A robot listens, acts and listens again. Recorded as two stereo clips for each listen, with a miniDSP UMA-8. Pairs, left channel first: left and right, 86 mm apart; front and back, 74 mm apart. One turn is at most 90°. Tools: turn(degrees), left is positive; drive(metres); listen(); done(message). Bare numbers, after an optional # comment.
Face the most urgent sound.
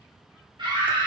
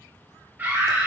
# The scream: 115° right.
turn(-90)
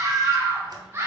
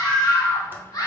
# The scream is now 30° right.
turn(-30)
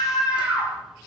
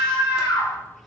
# The scream is now 15° right.
turn(-15)
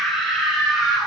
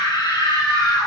done("Facing the scream.")